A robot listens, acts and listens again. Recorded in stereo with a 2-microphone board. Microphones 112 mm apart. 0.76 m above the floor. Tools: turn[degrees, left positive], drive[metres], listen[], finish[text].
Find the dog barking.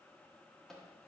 Action: listen[]
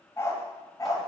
Thought: The dog barking: about 30° left or 150° left.
Action: turn[30]
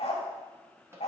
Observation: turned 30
Thought: So it is at 105° left.
Action: turn[105]
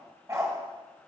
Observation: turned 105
Thought: The dog barking is now 30° right.
Action: turn[-30]
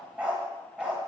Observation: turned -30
Thought: The dog barking is now 10° right.
Action: turn[-10]
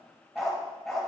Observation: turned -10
Action: finish[Found it: a dog barking, straight ahead.]